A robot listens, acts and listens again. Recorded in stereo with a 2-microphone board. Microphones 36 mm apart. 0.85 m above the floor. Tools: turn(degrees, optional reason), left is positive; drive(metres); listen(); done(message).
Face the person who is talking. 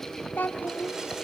turn(degrees=65, reason="The child speaking: about 65° left or 115° left.")
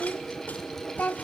turn(degrees=50, reason="So it is at 50° left.")
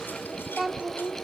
done("Facing the child speaking, 1 to 2 m away.")